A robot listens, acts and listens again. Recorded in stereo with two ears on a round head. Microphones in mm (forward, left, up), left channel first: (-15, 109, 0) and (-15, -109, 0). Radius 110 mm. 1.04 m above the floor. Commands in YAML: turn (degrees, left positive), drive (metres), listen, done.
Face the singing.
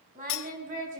turn: -35
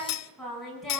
done: "Facing the singing, over 4 m away."